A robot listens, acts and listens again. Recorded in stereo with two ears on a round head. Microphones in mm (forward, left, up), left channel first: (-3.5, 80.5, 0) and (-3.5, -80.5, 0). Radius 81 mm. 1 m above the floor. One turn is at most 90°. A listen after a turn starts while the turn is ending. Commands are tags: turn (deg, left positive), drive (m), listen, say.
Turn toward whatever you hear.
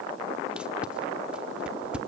<turn deg="-30"/>
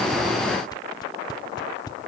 <turn deg="25"/>
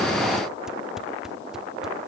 <say>Found it: tape being pulled, straight ahead, under 1 m away.</say>